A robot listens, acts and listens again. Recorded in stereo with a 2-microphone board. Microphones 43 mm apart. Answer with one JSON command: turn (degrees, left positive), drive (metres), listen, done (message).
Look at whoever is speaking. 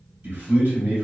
{"turn": -55}
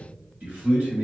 {"turn": -55}
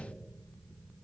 {"listen": true}
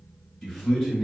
{"done": "Found it: a man speaking, straight ahead, 1 to 2 m away."}